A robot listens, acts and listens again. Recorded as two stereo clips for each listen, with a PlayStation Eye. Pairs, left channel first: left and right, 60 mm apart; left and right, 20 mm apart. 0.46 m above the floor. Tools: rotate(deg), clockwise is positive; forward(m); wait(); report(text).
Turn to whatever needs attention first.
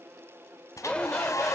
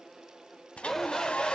rotate(-15)
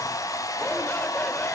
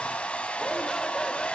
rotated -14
wait()
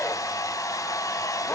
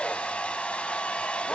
wait()
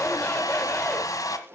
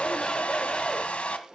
report("I heard a shout, but can't make it out now. It was about 5° left or 150° left.")